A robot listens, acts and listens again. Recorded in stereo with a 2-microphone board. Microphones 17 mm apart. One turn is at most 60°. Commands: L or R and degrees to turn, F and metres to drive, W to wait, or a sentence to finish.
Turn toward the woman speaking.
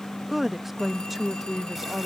L30
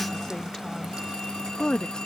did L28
L60
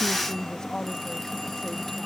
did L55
L45
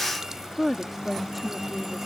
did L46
R15
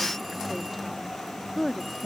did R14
Found it: a woman speaking, straight ahead.